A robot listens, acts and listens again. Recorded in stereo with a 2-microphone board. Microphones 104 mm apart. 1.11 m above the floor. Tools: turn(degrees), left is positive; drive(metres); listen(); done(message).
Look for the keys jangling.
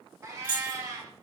turn(degrees=55)
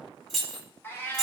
done("Facing the keys jangling, 2 to 4 m away.")